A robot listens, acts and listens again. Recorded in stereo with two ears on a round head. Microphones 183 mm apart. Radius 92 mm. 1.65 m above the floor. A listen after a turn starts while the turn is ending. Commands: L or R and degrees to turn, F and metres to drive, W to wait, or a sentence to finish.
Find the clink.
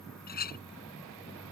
L45
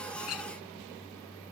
L90
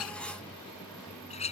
L30
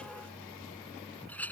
L10
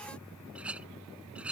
Facing the clink.